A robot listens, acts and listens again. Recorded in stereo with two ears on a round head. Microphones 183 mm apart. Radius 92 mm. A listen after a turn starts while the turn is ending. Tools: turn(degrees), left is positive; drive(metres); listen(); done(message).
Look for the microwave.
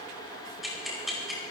listen()
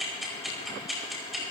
listen()
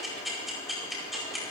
done("I can't make out a microwave to turn to.")